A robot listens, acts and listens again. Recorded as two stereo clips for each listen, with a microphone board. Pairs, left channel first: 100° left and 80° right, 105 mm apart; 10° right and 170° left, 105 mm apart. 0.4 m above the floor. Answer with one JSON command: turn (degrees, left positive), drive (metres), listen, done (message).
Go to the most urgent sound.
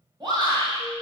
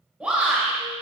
{"turn": -115}
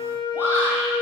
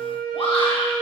{"listen": true}
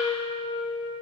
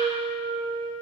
{"listen": true}
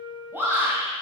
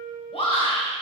{"turn": -15}
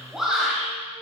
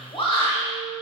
{"drive": 1.0}
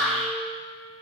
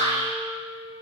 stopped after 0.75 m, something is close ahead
{"turn": 15}
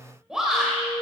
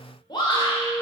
{"done": "I am next to the shout."}